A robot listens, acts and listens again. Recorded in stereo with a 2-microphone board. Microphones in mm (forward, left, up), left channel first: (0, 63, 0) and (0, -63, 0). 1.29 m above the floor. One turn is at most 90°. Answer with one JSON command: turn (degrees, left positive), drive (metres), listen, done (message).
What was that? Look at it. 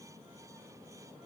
{"listen": true}
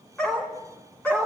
{"turn": 30}
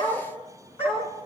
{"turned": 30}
{"turn": 90}
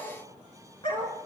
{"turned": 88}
{"turn": 40}
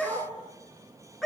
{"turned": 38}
{"done": "Found it: a dog barking, straight ahead."}